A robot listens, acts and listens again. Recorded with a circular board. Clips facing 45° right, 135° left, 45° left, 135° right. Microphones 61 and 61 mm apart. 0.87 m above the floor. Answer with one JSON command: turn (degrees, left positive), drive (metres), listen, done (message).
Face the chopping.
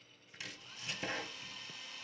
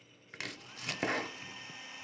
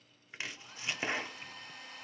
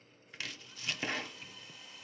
{"turn": 110}
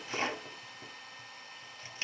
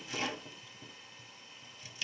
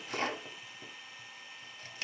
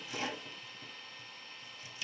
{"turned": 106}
{"done": "Facing the chopping."}